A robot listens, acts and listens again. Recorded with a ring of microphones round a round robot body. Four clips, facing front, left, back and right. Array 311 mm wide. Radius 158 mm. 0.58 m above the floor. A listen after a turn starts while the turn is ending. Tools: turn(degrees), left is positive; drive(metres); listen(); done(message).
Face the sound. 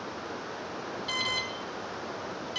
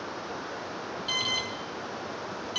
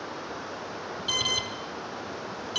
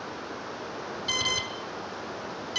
turn(degrees=-140)
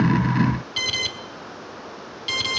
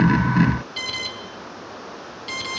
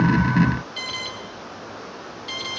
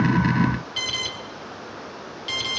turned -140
done("Facing the alarm.")